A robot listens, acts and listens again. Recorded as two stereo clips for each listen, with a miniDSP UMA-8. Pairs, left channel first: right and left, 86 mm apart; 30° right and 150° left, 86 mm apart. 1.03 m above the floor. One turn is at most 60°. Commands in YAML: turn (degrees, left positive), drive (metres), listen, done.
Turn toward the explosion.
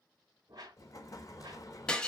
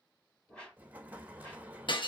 turn: -60
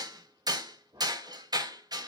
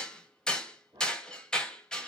turn: -60
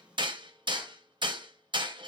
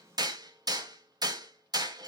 turn: -15
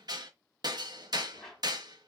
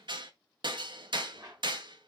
done: "I heard an explosion from this way, but can't make it out now."